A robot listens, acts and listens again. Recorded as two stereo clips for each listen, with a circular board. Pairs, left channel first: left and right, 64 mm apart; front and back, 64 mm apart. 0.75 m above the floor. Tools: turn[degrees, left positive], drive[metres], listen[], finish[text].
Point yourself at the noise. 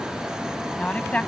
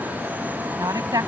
Thought: The woman speaking: 160° left.
Action: turn[160]
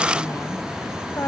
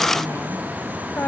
Thought: The woman speaking is now 50° left.
Action: turn[50]
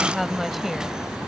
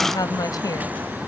Action: finish[Found it: a woman speaking, straight ahead.]